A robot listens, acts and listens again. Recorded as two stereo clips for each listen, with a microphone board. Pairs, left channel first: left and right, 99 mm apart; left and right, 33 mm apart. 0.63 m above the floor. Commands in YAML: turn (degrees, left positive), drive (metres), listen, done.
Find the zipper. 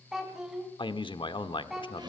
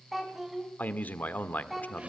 listen: true
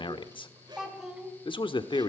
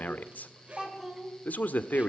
turn: -45
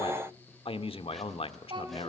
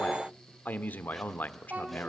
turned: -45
listen: true
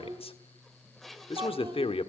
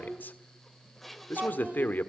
done: "Found it: a zipper, straight ahead."